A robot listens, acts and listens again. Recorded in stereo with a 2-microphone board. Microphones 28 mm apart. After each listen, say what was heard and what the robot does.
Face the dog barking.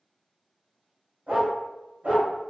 Turn 90° right.
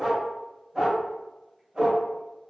So it is at 40° right. Turn 40° right.
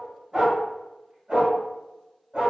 The dog barking is now 45° right. Turn 45° right.
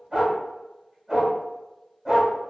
The dog barking is now 25° right. Turn 25° right.
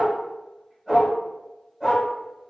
The dog barking is now 10° right. Turn 10° right.
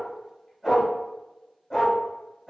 Facing the dog barking.